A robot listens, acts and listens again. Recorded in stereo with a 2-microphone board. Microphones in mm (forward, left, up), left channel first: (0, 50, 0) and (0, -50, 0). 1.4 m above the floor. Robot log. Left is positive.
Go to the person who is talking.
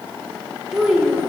cmd yaw +30
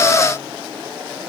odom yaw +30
cmd idle
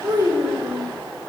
note: So it is at 30° right.
cmd yaw -30
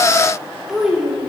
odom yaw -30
cmd fwd 1.0
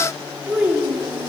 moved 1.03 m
note: The child speaking is now 15° right.
cmd yaw -15
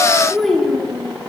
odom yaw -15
cmd fwd 1.0
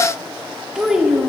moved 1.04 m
cmd fwd 1.0
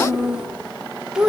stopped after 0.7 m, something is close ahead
note: The child speaking is now 10° right.
cmd yaw -10
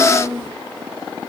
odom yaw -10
end: Arrived at the child speaking, straight ahead.